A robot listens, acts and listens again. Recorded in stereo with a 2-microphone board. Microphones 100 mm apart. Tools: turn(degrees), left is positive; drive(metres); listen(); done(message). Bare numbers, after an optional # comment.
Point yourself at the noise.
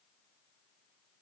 listen()
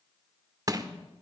# The crushing: about 35° right or 145° right.
turn(-35)
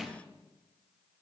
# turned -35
done("Facing the crushing.")